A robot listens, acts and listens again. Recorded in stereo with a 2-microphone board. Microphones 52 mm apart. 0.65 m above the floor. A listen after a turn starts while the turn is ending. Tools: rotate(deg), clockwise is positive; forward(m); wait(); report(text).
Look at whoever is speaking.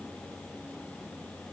wait()
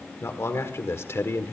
rotate(-60)
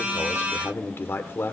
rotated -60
rotate(-55)
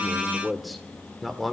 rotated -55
report("Found it: a man speaking, straight ahead, 1 to 2 m away.")